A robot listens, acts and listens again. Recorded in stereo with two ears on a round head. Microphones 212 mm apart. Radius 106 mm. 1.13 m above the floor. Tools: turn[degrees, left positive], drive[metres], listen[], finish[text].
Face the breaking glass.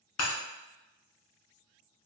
Action: turn[90]
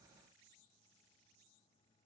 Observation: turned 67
Thought: Nothing new. It was at 25° left.
Action: turn[25]
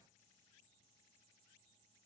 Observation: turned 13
Thought: Nothing new. It was at 10° left.
Action: turn[10]
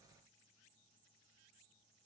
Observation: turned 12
Action: finish[Facing where the breaking glass came from. I can't hear it now.]